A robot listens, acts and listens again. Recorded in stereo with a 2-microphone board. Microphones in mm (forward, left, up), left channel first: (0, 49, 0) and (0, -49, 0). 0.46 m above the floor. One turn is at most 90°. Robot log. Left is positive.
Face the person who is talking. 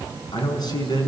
note: The man speaking: about 45° left or 135° left.
cmd yaw +45
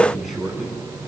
end: Facing the man speaking, over 4 m away.